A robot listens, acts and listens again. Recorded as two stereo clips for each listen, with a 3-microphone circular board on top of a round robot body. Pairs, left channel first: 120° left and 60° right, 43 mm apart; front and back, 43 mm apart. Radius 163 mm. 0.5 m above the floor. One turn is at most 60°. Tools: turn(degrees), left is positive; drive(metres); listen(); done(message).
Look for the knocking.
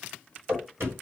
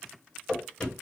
turn(degrees=-60)
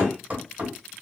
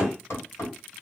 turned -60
turn(degrees=-10)
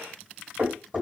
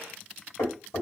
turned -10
done("Found it: knocking, straight ahead, 1 to 2 m away.")